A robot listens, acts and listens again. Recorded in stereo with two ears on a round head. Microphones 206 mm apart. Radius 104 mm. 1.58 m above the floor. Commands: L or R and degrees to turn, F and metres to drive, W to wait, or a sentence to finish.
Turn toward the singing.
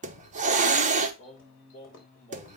L35
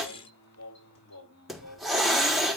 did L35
L105
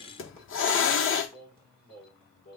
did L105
L35
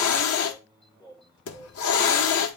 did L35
L15
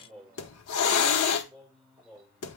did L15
Facing the singing, over 4 m away.